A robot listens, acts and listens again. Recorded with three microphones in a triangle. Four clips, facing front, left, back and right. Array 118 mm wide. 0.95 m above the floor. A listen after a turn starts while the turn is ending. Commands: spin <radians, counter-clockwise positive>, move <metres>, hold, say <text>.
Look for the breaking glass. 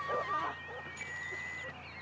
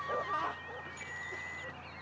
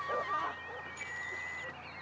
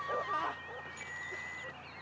hold
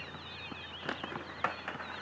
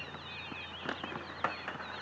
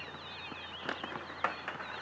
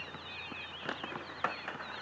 hold
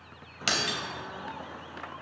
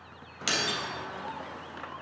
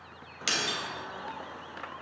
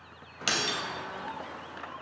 spin -0.52
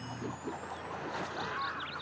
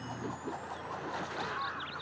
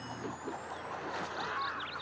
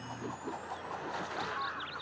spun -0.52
say Facing where the breaking glass came from. I can't hear it now.